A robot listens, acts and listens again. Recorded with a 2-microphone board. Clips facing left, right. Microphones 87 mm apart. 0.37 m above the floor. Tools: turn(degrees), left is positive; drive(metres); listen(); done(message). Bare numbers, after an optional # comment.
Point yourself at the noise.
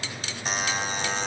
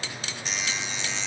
# The buzzer: about 45° left or 135° left.
turn(45)
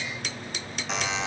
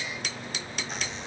# So it is at 90° left.
turn(90)
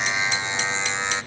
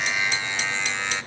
# The buzzer is now 20° left.
turn(20)
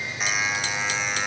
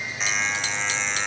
done("Found it: a buzzer, straight ahead.")